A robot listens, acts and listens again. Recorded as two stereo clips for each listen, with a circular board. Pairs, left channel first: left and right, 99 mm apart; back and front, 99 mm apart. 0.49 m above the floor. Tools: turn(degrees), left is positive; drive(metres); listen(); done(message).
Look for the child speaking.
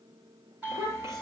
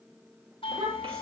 turn(degrees=-25)
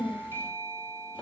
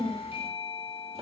turn(degrees=-15)
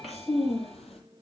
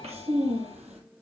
done("Found it: a child speaking, straight ahead.")